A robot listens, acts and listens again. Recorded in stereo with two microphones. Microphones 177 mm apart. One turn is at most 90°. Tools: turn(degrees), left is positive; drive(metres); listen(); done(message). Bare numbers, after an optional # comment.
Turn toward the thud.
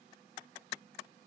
listen()
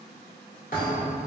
# The thud: about 55° left or 125° left.
turn(55)
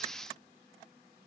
listen()
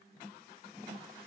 done("I heard a thud, but can't make it out now. It was about straight ahead or 70° left.")